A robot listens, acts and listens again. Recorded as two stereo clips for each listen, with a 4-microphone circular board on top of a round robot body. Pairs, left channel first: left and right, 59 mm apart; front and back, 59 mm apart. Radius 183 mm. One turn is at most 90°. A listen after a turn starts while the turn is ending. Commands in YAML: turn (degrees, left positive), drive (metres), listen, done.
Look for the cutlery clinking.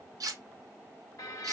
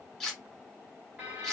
turn: -80
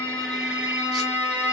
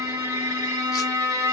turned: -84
listen: true
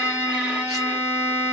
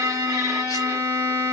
listen: true
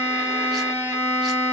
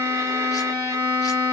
done: "I heard cutlery clinking from this way, but can't make it out now."